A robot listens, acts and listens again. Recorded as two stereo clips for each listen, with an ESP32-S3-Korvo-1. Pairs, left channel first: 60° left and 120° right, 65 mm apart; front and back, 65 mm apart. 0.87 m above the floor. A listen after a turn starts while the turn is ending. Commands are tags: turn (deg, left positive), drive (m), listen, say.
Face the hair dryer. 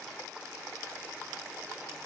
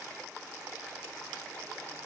<listen/>
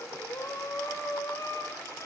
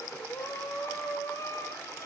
<listen/>
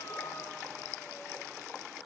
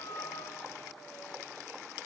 <say>I can't make out a hair dryer, only breathing.</say>